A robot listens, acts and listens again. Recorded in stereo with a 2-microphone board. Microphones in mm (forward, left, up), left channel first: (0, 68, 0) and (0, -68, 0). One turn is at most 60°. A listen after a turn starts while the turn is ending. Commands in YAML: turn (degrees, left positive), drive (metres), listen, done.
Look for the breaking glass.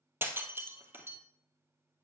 turn: -15
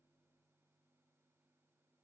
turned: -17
listen: true
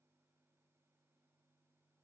done: "I heard breaking glass, but can't make it out now. It was about straight ahead or 145° right."